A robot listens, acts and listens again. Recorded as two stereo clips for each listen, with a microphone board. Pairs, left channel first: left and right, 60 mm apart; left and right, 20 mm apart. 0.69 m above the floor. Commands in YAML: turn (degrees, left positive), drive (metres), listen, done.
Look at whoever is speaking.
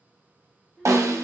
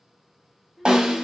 turn: 30
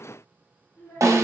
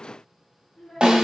turn: 135
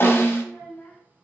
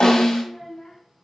turn: 15
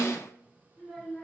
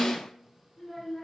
done: "Facing the child speaking."